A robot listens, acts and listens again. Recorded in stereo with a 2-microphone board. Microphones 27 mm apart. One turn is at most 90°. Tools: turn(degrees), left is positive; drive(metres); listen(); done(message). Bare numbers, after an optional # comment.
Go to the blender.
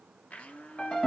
turn(90)
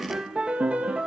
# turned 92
listen()
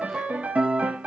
listen()
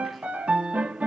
done("I heard a blender from this way, but can't make it out now. I did not reach it.")